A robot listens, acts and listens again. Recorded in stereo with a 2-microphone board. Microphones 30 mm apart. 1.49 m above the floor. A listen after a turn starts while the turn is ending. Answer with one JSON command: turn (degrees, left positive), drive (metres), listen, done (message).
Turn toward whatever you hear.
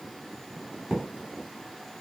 {"turn": -30}
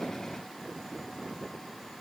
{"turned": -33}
{"listen": true}
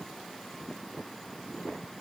{"done": "I heard a thud, but can't make it out now. It was about 5° left or 115° right."}